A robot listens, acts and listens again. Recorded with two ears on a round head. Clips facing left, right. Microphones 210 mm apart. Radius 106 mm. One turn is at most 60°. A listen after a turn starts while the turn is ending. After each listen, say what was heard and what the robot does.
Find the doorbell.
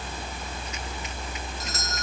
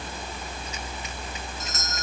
The doorbell: about 35° left or 145° left. Turn 35° left.
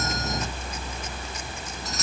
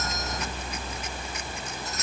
So it is at 110° left. Turn 60° left.
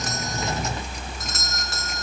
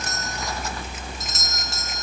The doorbell is now 50° left. Turn 50° left.
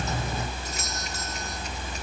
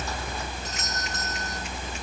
The doorbell is now 10° left. Turn 10° left.
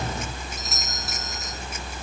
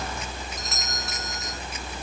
Found it: a doorbell, straight ahead.